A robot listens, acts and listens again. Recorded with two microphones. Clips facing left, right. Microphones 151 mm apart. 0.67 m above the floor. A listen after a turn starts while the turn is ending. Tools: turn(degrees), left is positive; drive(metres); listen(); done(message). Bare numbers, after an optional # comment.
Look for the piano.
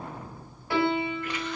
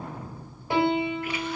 # The piano: about 20° right or 160° right.
turn(-20)
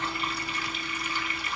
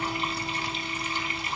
listen()
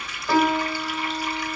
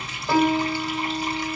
done("Found it: a piano, straight ahead, over 4 m away.")